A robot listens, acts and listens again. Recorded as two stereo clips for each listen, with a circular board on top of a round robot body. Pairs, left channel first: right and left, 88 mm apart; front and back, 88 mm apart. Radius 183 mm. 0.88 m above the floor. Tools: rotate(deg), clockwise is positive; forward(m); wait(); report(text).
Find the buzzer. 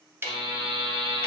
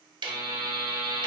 rotate(-110)
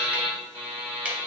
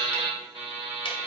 rotate(30)
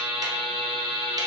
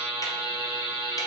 report("Facing the buzzer.")